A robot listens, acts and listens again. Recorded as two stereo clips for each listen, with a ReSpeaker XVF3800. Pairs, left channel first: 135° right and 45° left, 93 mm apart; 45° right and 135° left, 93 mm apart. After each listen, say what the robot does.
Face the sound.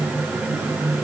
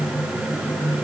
Keep listening.
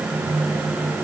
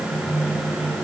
Keep listening.
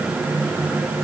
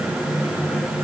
I can't make out anything.